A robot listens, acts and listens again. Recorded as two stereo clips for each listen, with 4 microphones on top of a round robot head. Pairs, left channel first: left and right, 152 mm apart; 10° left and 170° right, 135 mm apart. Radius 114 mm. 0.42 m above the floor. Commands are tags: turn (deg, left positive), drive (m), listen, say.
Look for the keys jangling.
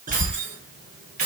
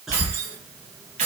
<turn deg="-125"/>
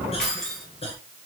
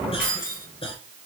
<say>Facing the keys jangling, 2 to 4 m away.</say>